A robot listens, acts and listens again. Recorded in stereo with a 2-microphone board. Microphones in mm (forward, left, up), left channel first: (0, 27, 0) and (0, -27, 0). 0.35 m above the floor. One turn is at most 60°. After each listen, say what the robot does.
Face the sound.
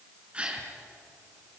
Turn 25° right.
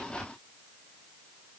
Keep listening.
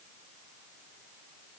I heard a gasp, but can't make it out now. It was about straight ahead or 130° right.